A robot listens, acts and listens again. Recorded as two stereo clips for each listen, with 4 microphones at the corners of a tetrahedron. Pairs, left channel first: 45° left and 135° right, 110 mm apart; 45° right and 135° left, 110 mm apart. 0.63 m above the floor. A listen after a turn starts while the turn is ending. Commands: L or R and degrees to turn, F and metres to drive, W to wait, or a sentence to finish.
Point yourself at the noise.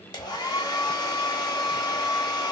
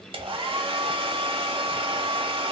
L95
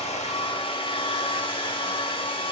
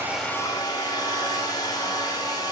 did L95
L10
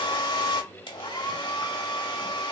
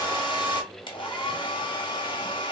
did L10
Found it: a hair dryer, straight ahead, 1 to 2 m away.